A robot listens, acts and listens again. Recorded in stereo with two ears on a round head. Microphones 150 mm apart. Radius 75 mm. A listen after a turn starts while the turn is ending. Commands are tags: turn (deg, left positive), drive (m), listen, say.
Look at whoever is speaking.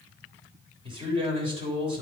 <turn deg="-30"/>
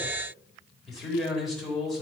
<say>Found it: a man speaking, straight ahead, 2 to 4 m away.</say>